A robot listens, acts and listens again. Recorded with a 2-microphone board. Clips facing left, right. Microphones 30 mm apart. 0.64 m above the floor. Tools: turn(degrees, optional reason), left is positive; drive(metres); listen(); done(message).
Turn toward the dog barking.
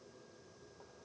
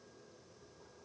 listen()
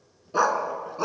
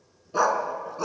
turn(degrees=15, reason="The dog barking: about 15° left or 165° left.")
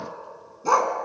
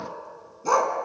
turn(degrees=30)
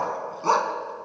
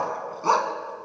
done("Facing the dog barking.")